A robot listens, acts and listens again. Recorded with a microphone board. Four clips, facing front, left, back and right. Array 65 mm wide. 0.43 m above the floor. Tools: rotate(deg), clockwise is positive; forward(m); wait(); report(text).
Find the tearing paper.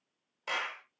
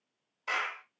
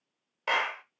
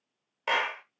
wait()
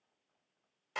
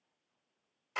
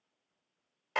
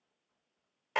wait()
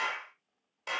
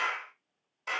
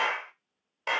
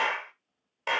report("I can't make out tearing paper, only a clap.")